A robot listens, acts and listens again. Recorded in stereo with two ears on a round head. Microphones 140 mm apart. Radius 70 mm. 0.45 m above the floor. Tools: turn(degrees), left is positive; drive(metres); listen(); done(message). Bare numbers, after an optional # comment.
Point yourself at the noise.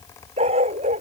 # The dog barking: about 40° right or 140° right.
turn(-40)
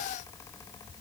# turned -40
listen()
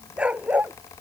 # So it is at 10° right.
turn(-10)
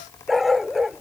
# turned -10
done("Found it: a dog barking, straight ahead.")